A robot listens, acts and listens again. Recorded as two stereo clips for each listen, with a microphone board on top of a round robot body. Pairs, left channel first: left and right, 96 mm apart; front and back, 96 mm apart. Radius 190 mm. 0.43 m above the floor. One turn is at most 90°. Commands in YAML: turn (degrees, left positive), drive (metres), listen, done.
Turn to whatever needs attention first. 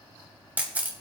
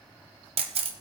listen: true
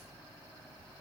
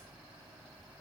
listen: true
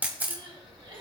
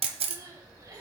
turn: -90
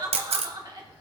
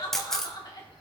turn: -45
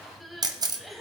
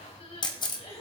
done: "Facing the crying."